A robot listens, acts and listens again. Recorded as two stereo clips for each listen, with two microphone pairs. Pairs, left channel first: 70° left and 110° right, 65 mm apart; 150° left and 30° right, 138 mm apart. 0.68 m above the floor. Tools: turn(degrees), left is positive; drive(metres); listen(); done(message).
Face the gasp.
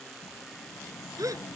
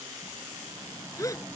turn(degrees=-140)
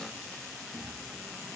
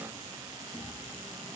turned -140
done("Facing where the gasp came from. I can't hear it now.")